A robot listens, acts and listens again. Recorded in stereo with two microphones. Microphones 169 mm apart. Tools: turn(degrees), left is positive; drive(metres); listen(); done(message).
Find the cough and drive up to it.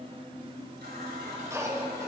turn(degrees=-20)
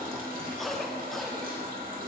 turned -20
drive(metres=1.0)
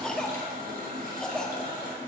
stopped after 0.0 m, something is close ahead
done("Blocked. The cough is further on, straight ahead.")